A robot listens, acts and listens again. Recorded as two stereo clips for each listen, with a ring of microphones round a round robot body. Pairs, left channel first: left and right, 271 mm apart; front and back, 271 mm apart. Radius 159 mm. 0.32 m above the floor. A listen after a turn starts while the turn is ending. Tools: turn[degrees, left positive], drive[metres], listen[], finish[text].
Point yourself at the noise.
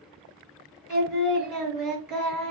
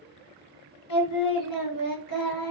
Action: finish[Facing the singing, 1 to 2 m away.]